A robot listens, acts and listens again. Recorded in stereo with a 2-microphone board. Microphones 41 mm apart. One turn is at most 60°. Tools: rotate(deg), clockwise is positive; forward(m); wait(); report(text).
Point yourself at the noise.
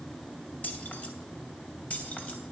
rotate(-40)
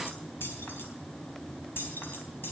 rotate(-60)
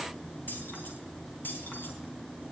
rotate(-55)
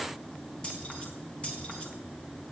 rotate(-30)
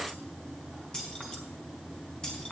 rotate(-20)
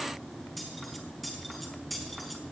report("Found it: keys jangling, straight ahead.")